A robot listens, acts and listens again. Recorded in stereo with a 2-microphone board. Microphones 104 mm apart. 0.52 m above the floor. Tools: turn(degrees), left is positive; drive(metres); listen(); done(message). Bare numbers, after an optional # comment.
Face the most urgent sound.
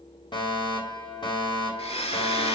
# The fire alarm: about 50° left or 130° left.
turn(50)
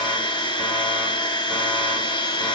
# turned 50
listen()
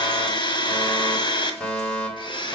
# So it is at 10° left.
turn(10)
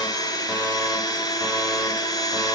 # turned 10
listen()
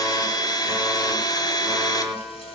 done("Found it: a fire alarm, straight ahead.")